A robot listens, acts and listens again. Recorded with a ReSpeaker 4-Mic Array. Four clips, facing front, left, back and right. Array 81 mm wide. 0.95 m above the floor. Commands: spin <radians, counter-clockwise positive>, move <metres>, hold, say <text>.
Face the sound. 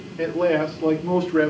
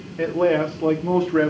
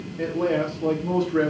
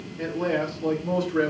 spin 1.40
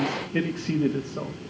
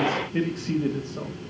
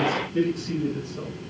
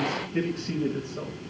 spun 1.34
spin 0.26
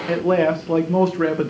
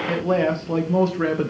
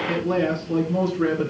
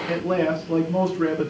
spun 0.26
spin 0.52
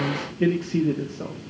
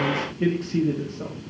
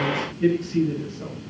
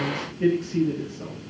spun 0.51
spin 0.35
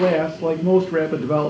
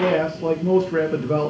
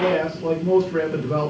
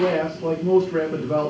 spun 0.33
spin 0.17
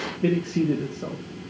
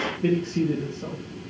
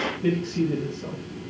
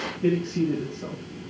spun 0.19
say Facing the man speaking.